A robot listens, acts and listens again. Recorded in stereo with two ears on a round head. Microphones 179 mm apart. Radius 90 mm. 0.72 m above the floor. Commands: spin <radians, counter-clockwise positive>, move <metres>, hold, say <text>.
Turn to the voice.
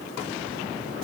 hold
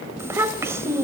spin -0.52
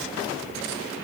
hold
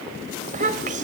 spin -2.44
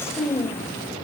spin 0.26
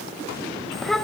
say Facing the child speaking.